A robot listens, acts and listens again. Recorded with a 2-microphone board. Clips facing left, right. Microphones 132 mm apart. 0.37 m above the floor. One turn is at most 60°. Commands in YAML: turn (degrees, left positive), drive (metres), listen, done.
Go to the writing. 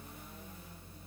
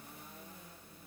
listen: true
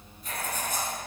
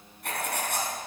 turn: -60
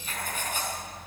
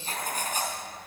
turn: -45
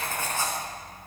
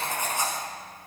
turn: -20
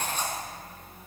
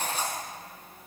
turn: -10
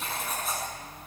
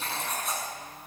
drive: 1.0
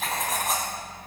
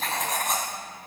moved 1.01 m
drive: 1.0
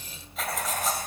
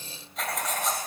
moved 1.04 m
drive: 1.0
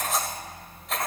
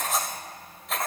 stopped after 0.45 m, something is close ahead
done: "Arrived at the writing, straight ahead."